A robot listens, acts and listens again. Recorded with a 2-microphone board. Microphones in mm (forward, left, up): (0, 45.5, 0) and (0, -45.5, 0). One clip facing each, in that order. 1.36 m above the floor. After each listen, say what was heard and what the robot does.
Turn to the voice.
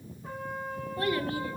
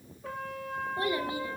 The child speaking: about 15° right or 165° right. Turn 15° right.
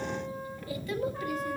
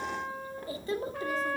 So it is at 150° right. Turn 150° right.
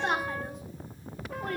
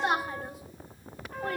Facing the child speaking.